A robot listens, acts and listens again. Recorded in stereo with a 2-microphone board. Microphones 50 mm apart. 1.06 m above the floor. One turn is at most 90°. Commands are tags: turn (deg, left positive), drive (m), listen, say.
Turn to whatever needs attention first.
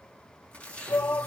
<turn deg="55"/>
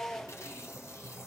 <turn deg="10"/>
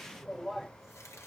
<say>Facing the shout, under 1 m away.</say>